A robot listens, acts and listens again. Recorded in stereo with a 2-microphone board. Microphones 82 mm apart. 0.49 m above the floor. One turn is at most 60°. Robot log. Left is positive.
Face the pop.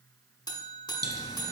note: The pop: about 60° right or 120° right.
cmd yaw -60
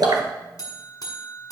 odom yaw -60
note: So it is at 60° right.
cmd yaw -60
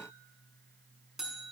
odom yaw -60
end: Facing where the pop came from. I can't hear it now.